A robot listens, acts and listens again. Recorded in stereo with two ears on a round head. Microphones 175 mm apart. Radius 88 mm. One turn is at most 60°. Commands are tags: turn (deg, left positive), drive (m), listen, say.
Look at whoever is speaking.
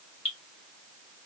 <listen/>
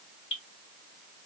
<listen/>
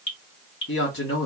<turn deg="60"/>
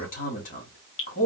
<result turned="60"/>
<turn deg="40"/>
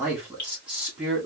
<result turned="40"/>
<say>Found it: a man speaking, straight ahead, 1 to 2 m away.</say>